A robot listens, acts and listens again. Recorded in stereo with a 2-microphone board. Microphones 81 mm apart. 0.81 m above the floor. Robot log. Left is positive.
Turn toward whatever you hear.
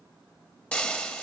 cmd yaw +30
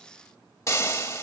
note: So it is at 140° left.
cmd yaw +140
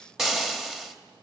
end: Facing the frying, 1 to 2 m away.